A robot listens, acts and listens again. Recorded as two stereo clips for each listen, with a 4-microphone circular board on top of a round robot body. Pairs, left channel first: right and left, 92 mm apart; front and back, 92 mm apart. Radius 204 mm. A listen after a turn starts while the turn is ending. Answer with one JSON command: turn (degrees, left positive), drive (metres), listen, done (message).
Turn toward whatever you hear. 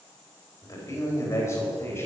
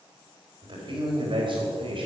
{"turn": -155}
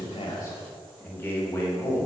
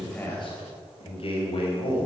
{"turn": -25}
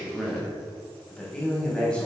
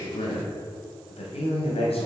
{"turn": -10}
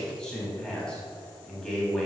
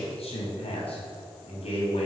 {"done": "Found it: a man speaking, straight ahead, over 4 m away."}